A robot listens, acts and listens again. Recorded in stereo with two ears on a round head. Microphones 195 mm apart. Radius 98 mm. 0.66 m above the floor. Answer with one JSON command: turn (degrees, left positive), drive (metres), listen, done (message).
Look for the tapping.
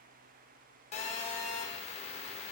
{"listen": true}
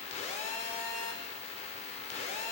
{"listen": true}
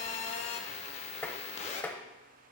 {"turn": 30}
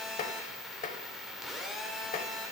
{"turn": 140}
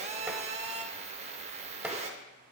{"done": "Found it: tapping, straight ahead."}